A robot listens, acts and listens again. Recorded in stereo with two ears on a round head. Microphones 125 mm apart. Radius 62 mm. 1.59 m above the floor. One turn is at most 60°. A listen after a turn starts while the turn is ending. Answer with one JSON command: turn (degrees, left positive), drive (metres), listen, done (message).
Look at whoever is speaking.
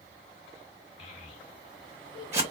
{"turn": 45}
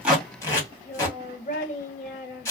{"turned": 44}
{"turn": 60}
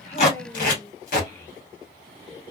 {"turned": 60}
{"turn": 25}
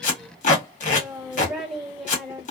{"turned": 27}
{"done": "Found it: a child speaking, straight ahead, 1 to 2 m away."}